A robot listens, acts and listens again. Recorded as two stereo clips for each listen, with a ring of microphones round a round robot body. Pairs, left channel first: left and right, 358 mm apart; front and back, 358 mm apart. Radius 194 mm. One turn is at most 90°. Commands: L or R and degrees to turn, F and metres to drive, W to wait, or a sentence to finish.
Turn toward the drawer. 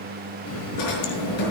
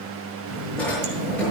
L85
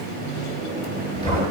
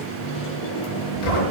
L10
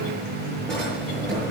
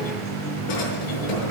Found it: a drawer, straight ahead, over 4 m away.